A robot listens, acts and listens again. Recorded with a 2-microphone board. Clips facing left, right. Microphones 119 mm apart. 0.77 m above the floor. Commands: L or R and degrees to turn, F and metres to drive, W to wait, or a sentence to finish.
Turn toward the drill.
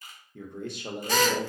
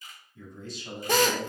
R50
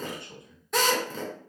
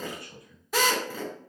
Facing the drill, 1 to 2 m away.